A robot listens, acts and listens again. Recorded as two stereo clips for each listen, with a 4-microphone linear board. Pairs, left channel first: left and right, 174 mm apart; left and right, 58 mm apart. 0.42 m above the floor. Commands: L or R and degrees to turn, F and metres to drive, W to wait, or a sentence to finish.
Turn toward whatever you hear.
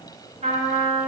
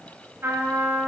R40
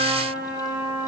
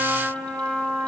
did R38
R100
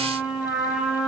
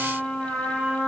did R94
Found it: a trumpet, straight ahead.